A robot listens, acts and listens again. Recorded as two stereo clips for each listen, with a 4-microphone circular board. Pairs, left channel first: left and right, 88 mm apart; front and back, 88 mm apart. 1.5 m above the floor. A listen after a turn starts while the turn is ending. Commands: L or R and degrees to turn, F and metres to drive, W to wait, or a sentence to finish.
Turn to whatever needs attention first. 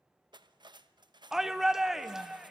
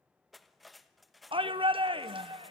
R175
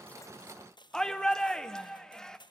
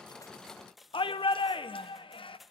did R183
Facing the shout.